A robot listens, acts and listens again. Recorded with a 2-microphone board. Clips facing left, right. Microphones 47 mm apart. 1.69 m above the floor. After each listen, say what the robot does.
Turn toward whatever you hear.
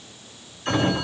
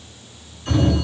Turn 45° left.
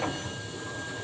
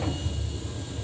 Turn 90° left.
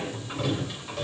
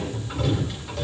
Facing the sliding door.